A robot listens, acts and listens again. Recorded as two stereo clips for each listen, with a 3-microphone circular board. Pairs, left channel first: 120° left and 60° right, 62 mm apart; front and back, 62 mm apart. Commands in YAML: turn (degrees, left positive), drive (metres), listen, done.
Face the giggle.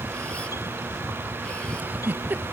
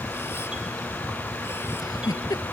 done: "Found it: a giggle, straight ahead."